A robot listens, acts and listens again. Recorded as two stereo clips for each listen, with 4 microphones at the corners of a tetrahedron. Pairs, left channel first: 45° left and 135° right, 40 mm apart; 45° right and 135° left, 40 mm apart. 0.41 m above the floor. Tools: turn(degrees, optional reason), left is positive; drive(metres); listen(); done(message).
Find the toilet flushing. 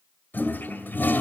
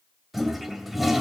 turn(degrees=55, reason="The toilet flushing: 55° left.")
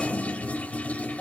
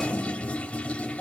done("Found it: a toilet flushing, straight ahead.")